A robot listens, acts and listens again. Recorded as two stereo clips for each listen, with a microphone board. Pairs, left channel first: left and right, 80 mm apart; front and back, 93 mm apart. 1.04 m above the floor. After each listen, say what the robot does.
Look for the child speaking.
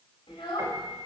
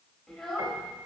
Turn 85° left.
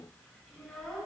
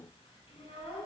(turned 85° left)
Found it: a child speaking, straight ahead.